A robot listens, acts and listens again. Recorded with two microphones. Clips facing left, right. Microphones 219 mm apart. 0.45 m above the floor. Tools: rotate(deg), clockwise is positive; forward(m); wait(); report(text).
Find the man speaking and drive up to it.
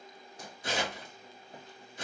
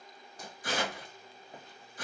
wait()
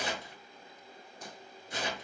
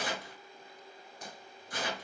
wait()
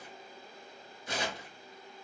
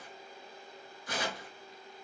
report("I can't make out a man speaking to turn to.")